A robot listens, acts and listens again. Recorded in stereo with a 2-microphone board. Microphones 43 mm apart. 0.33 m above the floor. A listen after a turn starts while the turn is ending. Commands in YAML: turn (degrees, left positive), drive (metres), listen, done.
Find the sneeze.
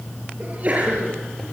turn: -35
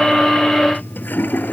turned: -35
listen: true
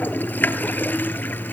done: "I heard a sneeze, but can't make it out now. It was about straight ahead or 110° right."